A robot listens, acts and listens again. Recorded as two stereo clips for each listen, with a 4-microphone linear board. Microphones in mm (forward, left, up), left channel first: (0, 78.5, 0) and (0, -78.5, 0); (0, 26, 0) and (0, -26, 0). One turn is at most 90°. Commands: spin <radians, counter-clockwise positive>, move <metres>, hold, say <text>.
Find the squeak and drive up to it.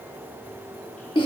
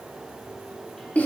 hold
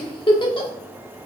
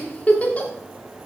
hold
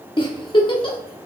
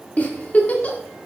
say I can't make out a squeak to turn to.